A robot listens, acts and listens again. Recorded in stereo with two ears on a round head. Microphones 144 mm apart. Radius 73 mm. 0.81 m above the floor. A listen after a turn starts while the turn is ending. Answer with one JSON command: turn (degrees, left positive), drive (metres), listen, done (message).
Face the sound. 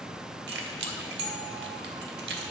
{"turn": -90}
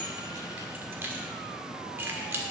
{"turn": -15}
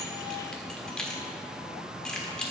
{"done": "Facing the keys jangling."}